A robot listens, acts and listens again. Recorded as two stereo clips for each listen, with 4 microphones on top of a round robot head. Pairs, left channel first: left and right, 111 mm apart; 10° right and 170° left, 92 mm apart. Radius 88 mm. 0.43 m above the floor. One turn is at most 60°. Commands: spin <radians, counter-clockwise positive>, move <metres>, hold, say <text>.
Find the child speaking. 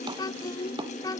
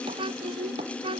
spin 1.05
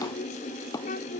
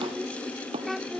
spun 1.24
spin 1.05
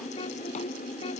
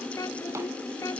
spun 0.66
spin 0.70
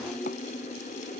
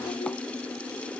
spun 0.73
hold
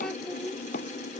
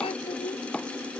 say Facing the child speaking.